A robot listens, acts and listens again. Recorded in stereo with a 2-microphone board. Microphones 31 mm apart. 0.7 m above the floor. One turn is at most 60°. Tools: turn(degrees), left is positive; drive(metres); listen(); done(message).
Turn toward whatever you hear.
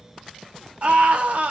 turn(degrees=-55)
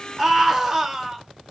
turn(degrees=-20)
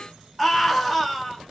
done("Found it: a scream, straight ahead.")